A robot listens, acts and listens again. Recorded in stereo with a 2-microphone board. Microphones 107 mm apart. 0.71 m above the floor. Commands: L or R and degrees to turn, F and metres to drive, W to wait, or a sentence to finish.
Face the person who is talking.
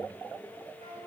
W
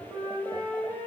W
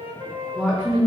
R30
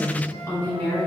L20
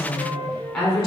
Found it: a woman speaking, straight ahead, 1 to 2 m away.